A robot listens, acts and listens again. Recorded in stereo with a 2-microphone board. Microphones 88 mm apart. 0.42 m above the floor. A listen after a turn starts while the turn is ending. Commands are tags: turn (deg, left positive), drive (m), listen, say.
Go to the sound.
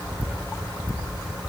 <listen/>
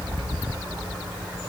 <listen/>
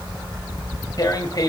<turn deg="45"/>
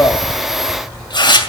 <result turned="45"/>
<turn deg="80"/>
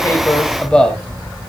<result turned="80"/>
<turn deg="10"/>
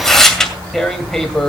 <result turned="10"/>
<drive m="1.0"/>
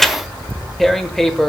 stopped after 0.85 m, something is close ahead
<say>Arrived at the tearing paper, straight ahead.</say>